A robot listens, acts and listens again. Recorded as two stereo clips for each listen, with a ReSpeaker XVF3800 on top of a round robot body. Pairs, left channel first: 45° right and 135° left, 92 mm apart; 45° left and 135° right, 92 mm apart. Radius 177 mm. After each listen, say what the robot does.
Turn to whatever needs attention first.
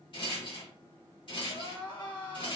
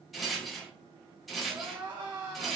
Turn 85° right.
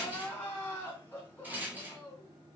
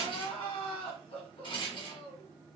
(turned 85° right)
Turn 25° left.
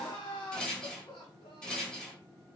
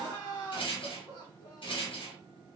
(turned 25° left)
Found it: crying, straight ahead, 1 to 2 m away.